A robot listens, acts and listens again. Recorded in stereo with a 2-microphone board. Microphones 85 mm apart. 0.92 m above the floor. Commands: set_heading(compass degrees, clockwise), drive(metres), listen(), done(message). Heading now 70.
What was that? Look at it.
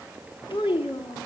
set_heading(340)
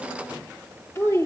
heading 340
set_heading(310)
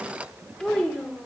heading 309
set_heading(294)
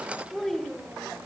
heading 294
done("Found it: a child speaking, straight ahead.")